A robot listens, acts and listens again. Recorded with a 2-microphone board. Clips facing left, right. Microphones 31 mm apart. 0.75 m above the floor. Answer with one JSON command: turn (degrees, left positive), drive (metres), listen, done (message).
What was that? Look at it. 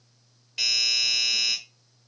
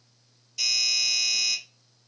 {"turn": 60}
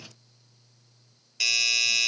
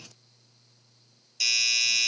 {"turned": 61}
{"turn": 35}
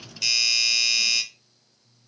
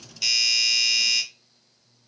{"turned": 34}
{"done": "Found it: a doorbell, straight ahead."}